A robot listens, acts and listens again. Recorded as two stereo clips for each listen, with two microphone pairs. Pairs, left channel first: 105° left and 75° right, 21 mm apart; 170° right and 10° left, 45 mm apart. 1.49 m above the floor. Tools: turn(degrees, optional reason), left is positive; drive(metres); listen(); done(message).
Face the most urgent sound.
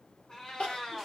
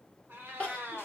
turn(degrees=125, reason="The crying: 125° left.")
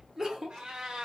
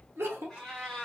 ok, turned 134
done("Facing the crying, 1 to 2 m away.")